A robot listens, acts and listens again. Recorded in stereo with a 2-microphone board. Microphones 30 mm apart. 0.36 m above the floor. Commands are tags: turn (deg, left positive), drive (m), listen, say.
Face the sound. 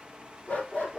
<turn deg="90"/>
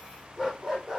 <say>Found it: a dog barking, straight ahead, 2 to 4 m away.</say>